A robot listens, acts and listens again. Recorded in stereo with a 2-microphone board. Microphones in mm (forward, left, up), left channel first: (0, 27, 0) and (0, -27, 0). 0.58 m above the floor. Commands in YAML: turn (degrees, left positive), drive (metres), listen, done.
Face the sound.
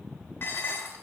turn: 50
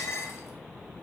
turn: 75
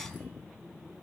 listen: true
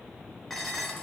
done: "Facing the dishes clattering."